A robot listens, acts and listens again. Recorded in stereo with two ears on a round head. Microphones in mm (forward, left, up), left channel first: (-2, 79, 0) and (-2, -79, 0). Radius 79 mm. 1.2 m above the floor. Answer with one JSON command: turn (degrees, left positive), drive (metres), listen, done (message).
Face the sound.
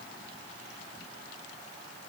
{"listen": true}
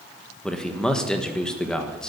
{"turn": 30}
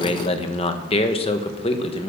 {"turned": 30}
{"turn": 145}
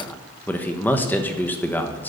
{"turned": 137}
{"turn": 10}
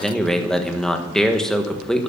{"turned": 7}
{"done": "Facing the man speaking, 1 to 2 m away."}